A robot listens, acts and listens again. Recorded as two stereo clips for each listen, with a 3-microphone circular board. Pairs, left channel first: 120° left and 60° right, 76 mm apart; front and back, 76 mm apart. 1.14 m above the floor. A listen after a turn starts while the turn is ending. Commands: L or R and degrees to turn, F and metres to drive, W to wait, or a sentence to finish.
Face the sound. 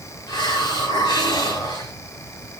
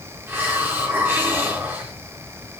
L120
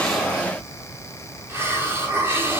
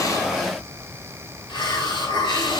Facing the hiss, over 4 m away.